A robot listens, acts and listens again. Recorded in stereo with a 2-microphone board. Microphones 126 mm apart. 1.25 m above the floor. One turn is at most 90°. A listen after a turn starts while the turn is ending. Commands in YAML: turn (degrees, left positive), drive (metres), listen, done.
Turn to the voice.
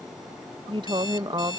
turn: -35
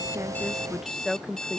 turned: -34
done: "Facing the woman speaking."